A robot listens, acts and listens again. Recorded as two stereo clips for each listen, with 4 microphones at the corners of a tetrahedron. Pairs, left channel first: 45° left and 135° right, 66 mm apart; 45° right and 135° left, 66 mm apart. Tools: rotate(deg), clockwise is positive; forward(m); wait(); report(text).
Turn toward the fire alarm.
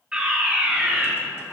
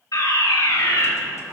rotate(60)
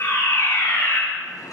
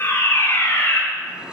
report("Facing the fire alarm, over 4 m away.")